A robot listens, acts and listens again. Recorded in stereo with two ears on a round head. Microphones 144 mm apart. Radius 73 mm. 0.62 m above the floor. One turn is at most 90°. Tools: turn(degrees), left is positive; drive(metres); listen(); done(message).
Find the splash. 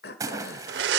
turn(degrees=-20)
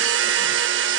listen()
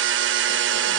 done("I heard a splash, but can't make it out now. It was about straight ahead or 140° right.")